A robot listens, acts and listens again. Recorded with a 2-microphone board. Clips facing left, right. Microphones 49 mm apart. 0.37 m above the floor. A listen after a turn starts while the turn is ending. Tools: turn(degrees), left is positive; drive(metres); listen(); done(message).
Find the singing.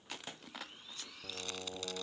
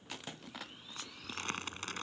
turn(degrees=90)
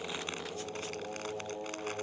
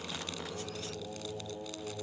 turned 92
turn(degrees=20)
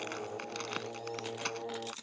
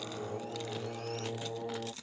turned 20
done("Found it: singing, straight ahead.")